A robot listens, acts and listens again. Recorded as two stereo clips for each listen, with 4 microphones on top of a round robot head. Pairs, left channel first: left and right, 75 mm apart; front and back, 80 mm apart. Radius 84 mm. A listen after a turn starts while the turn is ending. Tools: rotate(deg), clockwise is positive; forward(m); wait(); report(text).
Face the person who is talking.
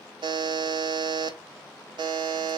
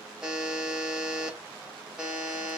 wait()
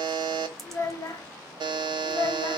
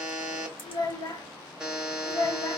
rotate(-40)
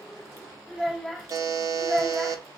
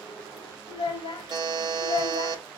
report("Facing the child speaking, 1 to 2 m away.")